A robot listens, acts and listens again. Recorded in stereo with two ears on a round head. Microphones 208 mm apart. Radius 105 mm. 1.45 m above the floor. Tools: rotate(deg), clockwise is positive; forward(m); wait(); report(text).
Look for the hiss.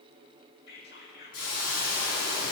rotate(-70)
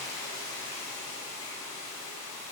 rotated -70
rotate(-15)
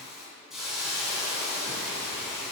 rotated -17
report("Facing the hiss, 2 to 4 m away.")